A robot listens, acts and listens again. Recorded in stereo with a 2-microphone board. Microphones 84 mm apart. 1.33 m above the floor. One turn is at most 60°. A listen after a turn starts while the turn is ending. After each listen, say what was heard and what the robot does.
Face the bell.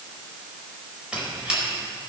Keep listening.
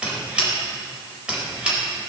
Keep listening.
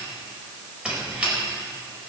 I can't make out a bell to turn to.